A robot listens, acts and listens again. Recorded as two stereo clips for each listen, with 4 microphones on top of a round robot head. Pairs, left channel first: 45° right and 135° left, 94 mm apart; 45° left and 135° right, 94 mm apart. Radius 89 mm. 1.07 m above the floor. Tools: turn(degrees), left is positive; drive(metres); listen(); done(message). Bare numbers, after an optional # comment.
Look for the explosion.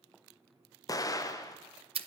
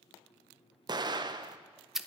# The explosion: 95° right.
turn(-95)
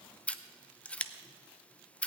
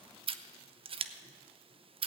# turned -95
done("I heard an explosion from this way, but can't make it out now.")